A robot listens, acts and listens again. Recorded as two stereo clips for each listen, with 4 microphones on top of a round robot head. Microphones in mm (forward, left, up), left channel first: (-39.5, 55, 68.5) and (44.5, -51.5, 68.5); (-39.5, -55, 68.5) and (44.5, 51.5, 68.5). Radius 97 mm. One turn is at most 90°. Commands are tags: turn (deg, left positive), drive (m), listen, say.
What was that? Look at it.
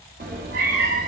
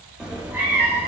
<turn deg="-20"/>
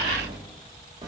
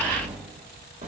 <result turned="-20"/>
<turn deg="10"/>
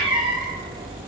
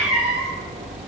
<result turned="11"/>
<turn deg="15"/>
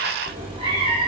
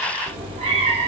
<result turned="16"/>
<say>Facing the cat meowing, 2 to 4 m away.</say>